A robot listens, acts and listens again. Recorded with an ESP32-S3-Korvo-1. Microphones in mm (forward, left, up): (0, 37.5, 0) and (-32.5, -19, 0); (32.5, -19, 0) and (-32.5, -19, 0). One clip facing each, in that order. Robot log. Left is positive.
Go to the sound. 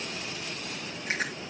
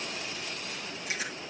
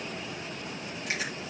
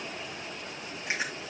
note: The chewing: 115° left.
cmd yaw +115
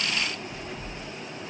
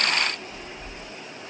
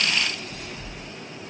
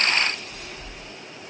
cmd fwd 1.0
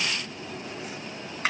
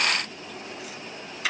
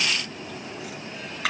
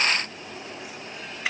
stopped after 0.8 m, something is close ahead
note: The chewing is now 10° left.
cmd yaw +10
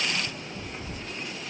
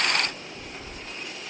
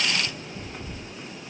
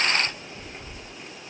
end: Blocked. The chewing is further on, straight ahead.